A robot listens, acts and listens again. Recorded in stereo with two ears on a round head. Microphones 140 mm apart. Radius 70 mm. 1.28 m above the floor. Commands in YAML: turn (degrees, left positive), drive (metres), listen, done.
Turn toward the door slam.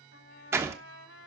turn: -15
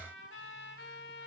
listen: true
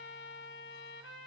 done: "I heard a door slam, but can't make it out now. It was about straight ahead or 150° right."